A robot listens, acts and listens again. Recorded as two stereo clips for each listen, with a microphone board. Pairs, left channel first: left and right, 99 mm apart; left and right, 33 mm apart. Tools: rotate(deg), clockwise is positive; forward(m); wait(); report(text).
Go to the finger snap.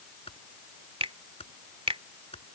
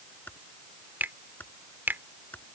rotate(90)
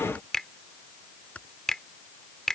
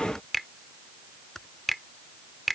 forward(1.0)
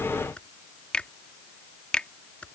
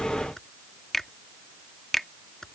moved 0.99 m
rotate(-10)
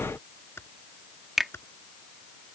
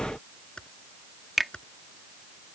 forward(1.0)
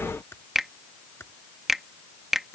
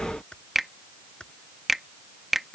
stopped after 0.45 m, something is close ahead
report("I am next to the finger snap.")